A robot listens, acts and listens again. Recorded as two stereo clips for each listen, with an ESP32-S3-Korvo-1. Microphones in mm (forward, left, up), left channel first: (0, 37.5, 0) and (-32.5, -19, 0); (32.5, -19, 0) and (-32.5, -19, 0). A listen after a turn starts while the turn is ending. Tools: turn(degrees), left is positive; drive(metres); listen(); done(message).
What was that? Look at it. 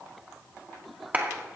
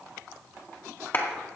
turn(degrees=-55)
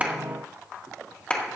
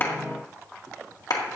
turn(degrees=-10)
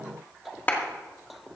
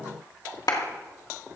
done("Found it: a clap, straight ahead, 1 to 2 m away.")